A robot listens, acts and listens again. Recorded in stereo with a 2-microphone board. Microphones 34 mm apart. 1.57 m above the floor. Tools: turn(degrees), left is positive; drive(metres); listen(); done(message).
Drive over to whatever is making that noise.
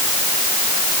listen()
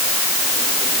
listen()
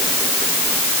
done("I can't make out anything.")